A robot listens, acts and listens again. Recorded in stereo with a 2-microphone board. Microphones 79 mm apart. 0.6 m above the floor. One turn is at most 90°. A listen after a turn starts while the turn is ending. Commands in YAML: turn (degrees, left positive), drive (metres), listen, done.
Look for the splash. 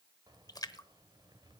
turn: 45
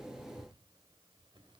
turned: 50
listen: true
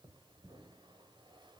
done: "I heard a splash, but can't make it out now. It was about 5° right or 85° left."